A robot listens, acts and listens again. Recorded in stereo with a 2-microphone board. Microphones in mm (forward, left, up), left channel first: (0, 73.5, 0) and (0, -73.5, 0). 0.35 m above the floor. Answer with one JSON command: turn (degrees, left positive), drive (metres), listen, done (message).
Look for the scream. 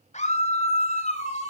{"turn": 50}
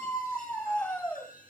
{"turn": 15}
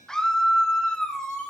{"done": "Found it: a scream, straight ahead, 1 to 2 m away."}